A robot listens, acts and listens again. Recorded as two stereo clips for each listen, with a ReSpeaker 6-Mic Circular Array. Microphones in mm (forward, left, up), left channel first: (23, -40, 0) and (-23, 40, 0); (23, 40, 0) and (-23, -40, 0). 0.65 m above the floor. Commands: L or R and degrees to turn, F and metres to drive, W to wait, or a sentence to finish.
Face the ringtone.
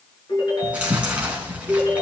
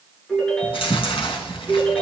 R20
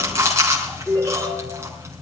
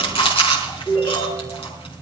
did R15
Found it: a ringtone, straight ahead, over 4 m away.